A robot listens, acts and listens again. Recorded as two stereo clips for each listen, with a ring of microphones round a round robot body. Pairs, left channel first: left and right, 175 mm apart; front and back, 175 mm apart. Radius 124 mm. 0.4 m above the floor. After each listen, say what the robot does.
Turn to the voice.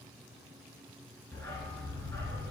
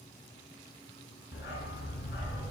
Keep listening.
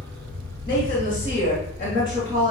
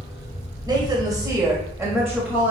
Turn 85° left.
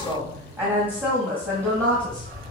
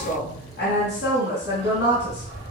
Turn 20° right.
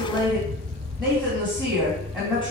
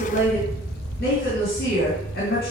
Found it: a woman speaking, straight ahead.